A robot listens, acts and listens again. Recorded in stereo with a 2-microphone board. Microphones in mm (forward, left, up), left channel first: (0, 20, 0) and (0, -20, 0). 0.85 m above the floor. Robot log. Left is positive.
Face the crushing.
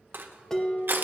note: The crushing: about 65° right or 115° right.
cmd yaw -65
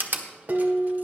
note: So it is at 50° right.
cmd yaw -50
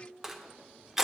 end: Facing the crushing.